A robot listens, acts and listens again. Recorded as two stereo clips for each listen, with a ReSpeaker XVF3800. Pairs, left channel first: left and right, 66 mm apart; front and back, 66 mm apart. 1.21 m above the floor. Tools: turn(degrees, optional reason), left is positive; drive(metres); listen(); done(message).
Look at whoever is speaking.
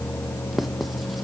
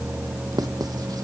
listen()
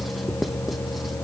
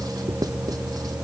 listen()
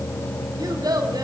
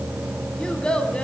turn(degrees=-75, reason="The child speaking: 75° right.")
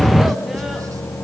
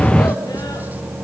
listen()
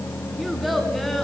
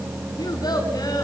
done("Found it: a child speaking, straight ahead.")